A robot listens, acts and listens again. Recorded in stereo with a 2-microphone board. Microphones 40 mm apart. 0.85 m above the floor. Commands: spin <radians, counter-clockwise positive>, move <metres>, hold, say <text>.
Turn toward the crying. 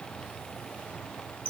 hold
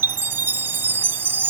hold
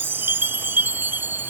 say I can't make out crying, only a chime.